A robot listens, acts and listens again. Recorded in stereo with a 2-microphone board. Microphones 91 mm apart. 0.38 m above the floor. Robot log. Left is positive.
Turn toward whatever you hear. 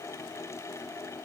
cmd idle
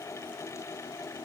cmd idle
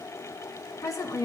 note: The woman speaking: about 40° left or 140° left.
cmd yaw +40
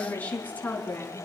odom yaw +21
note: So it is at 20° left.
cmd yaw +20
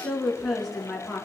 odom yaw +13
end: Facing the woman speaking.